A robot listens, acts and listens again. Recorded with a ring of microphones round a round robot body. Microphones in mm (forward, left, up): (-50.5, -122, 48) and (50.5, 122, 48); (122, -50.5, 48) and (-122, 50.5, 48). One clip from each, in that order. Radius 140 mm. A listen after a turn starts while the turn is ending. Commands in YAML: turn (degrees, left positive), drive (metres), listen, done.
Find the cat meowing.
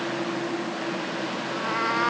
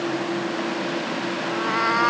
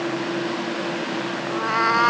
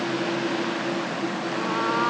turn: -10
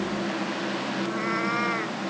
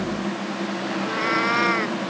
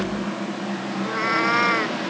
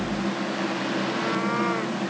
done: "Found it: a cat meowing, straight ahead."